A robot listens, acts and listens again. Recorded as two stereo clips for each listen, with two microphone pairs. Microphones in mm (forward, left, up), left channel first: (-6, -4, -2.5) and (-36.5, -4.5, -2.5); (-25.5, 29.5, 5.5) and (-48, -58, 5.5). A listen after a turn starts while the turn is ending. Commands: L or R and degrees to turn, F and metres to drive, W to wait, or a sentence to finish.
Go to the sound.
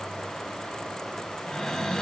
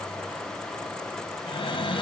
L85
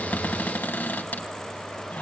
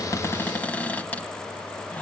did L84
F1.0
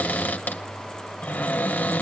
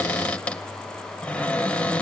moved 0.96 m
F1.0
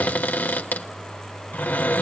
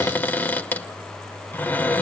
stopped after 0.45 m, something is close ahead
Arrived at the cupboard door, straight ahead.